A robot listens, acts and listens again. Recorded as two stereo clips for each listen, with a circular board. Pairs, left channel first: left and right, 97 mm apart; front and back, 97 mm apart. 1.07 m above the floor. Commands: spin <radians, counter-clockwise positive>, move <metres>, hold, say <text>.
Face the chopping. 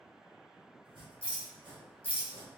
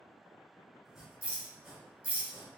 spin -1.66
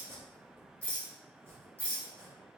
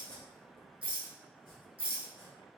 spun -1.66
spin -0.52
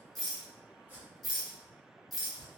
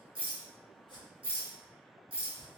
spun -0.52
spin -0.35
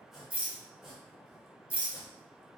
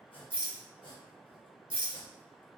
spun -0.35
say Found it: chopping, straight ahead.